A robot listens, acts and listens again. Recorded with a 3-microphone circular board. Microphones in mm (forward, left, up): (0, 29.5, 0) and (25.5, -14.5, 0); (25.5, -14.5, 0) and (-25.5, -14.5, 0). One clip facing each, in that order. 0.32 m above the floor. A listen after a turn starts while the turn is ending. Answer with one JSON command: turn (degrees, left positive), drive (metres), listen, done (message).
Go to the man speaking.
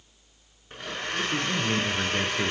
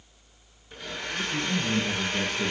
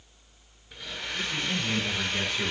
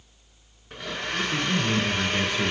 {"turn": 105}
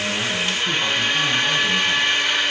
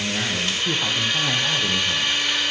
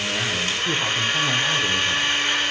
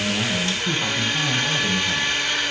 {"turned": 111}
{"listen": true}
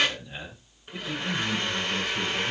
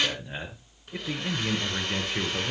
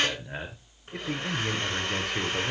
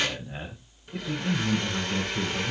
{"drive": 1.0}
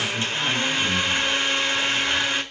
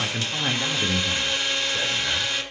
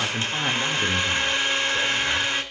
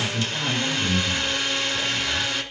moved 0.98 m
{"drive": 1.0}
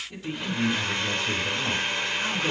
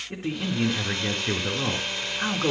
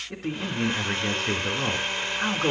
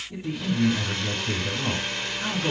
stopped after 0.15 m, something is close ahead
{"turn": -10}
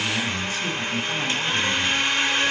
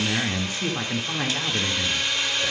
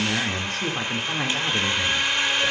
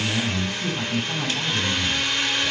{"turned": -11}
{"done": "Something is in my way. I am facing the man speaking but have not reached it."}